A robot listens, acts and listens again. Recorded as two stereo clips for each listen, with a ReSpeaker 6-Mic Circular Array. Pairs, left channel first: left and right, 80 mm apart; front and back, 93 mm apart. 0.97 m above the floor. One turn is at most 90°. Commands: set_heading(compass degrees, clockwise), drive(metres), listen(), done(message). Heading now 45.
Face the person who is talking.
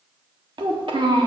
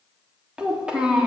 set_heading(135)
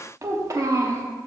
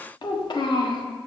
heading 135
set_heading(175)
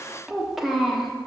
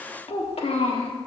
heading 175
done("Found it: a child speaking, straight ahead, 1 to 2 m away.")